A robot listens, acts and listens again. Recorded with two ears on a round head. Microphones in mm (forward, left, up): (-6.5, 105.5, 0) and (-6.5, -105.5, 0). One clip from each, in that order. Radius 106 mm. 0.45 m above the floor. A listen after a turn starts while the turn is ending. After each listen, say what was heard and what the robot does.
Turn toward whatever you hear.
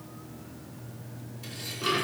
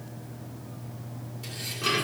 Turn 30° right.
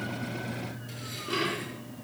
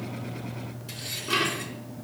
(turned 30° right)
So it is at 140° right. Turn 140° right.
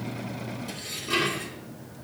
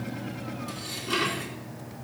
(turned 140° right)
Facing the dishes clattering.